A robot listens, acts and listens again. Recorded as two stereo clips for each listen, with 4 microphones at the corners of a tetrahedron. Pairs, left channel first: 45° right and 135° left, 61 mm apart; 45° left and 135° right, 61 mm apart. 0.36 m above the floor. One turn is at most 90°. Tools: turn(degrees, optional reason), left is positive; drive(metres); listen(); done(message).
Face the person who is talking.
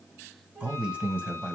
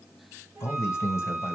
turn(degrees=70, reason="The man speaking: 70° left.")
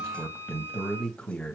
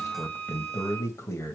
turn(degrees=25, reason="The man speaking is now 25° left.")
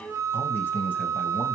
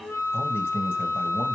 done("Facing the man speaking, 2 to 4 m away.")